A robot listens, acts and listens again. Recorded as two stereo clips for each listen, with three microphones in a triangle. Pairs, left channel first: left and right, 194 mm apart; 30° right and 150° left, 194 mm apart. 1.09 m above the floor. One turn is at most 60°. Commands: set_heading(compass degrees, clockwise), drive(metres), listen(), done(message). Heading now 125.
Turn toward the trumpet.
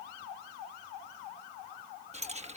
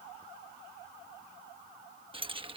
listen()
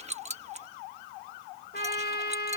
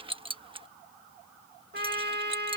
set_heading(65)
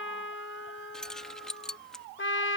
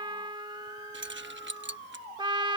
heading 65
set_heading(5)
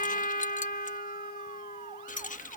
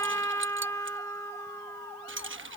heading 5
set_heading(320)
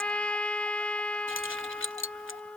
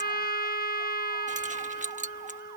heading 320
done("Found it: a trumpet, straight ahead.")